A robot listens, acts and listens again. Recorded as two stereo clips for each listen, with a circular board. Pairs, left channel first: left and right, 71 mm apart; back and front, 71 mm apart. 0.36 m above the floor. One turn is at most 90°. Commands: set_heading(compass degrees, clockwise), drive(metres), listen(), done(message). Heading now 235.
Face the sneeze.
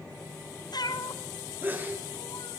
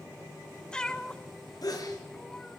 set_heading(325)
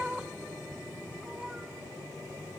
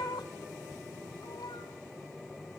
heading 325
set_heading(30)
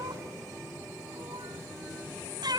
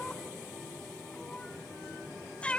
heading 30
done("I heard a sneeze from this way, but can't make it out now.")